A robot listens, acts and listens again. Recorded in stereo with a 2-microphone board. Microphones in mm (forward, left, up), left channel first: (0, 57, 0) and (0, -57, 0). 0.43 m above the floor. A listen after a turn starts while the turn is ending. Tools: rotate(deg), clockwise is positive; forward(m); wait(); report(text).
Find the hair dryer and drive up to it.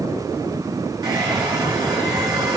rotate(35)
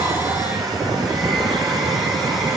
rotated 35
forward(1.0)
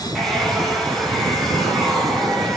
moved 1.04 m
forward(1.0)
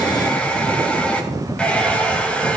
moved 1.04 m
rotate(-10)
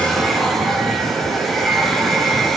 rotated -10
forward(1.0)
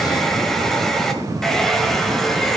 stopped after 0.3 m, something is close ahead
report("I am next to the hair dryer.")